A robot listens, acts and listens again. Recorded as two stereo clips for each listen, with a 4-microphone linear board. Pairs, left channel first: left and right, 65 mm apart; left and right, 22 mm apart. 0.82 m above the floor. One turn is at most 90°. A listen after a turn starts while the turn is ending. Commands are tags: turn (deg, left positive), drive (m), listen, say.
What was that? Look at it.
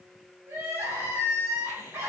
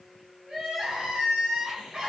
<turn deg="-45"/>
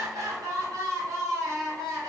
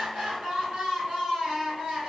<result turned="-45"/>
<turn deg="-80"/>
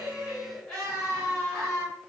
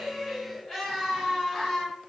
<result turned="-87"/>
<say>Facing the crying.</say>